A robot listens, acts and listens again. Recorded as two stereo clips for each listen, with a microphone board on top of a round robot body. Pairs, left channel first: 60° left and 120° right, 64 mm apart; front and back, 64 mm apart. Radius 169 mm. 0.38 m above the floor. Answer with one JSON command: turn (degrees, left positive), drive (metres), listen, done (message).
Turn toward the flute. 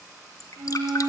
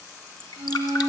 {"turn": -135}
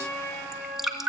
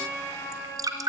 {"done": "Facing the flute, over 4 m away."}